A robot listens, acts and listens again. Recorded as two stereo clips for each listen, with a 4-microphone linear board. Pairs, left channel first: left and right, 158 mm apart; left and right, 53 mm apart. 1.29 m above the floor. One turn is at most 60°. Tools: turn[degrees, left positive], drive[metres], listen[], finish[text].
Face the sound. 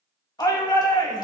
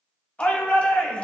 Thought: The shout: about 25° left or 155° left.
Action: turn[25]
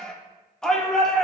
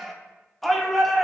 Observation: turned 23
Action: finish[Facing the shout, 1 to 2 m away.]